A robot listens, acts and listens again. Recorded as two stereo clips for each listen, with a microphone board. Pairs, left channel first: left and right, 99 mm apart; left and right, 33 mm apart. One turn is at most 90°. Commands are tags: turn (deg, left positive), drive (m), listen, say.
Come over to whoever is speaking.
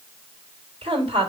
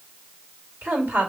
<turn deg="-90"/>
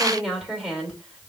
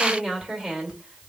<drive m="1.0"/>
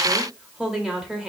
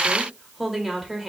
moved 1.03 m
<turn deg="-10"/>
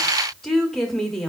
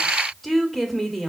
<drive m="1.0"/>
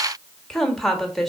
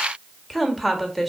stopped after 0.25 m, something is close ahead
<say>Arrived at the woman speaking, straight ahead.</say>